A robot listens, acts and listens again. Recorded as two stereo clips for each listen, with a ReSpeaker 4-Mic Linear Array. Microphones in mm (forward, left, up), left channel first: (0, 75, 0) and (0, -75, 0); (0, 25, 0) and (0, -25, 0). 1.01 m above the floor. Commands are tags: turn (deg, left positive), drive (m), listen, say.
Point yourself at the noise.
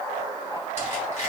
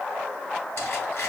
<turn deg="50"/>
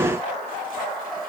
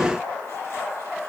<listen/>
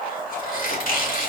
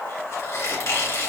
<turn deg="80"/>
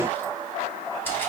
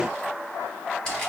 <turn deg="15"/>
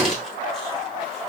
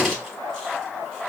<say>Found it: a squeak, straight ahead.</say>